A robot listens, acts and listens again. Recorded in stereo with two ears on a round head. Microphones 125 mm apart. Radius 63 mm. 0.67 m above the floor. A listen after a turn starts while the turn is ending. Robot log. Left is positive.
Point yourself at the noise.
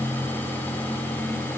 cmd idle
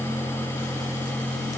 cmd idle
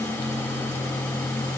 end: I can't make out anything to turn to.